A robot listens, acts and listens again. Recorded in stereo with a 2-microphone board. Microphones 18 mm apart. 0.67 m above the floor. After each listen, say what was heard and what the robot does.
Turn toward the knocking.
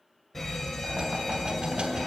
Turn 90° right.
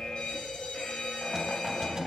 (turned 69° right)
So it is at 30° right. Turn 30° right.
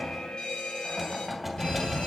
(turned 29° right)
Facing the knocking, 2 to 4 m away.